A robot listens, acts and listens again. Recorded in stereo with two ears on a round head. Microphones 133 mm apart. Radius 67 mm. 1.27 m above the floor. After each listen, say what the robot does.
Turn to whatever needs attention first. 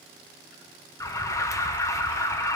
Turn 20° left.
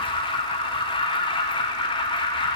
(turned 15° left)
Turn 145° left.
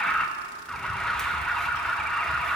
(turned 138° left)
Facing the alarm.